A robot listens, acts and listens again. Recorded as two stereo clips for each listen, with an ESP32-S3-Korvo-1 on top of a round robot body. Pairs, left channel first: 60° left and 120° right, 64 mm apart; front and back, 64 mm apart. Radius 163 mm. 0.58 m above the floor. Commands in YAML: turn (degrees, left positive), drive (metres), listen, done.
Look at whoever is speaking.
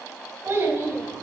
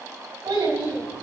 turn: -175
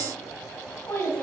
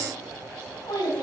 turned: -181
done: "Facing the child speaking."